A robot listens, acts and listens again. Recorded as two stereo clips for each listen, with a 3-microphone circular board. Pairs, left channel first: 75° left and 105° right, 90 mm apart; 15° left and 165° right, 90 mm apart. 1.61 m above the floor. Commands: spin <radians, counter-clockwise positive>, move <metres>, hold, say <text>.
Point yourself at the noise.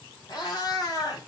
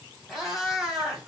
spin 1.92
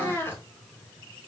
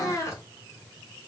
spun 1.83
spin 0.52
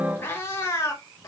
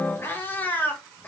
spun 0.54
spin 1.31
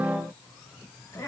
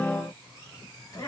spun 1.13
spin 0.52
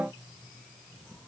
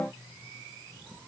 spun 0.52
hold
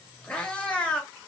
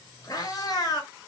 say Found it: a cat meowing, straight ahead, 1 to 2 m away.